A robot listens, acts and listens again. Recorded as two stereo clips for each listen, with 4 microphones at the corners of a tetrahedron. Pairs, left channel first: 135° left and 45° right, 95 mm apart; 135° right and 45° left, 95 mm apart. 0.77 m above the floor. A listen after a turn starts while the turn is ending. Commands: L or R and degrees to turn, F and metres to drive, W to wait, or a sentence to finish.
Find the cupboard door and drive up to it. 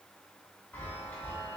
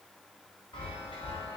W
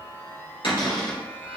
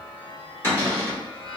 L160
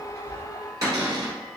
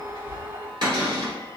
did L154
L10
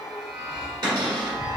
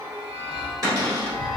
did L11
F1.0
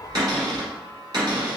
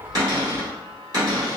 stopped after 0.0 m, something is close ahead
Something is in my way. I am facing the cupboard door but have not reached it.